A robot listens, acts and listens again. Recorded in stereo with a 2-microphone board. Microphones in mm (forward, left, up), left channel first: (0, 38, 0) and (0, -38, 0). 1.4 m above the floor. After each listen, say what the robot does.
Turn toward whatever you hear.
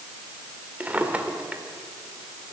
Turn 20° right.
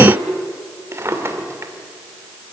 Turn 140° right.
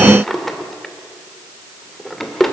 Facing the drawer, 2 to 4 m away.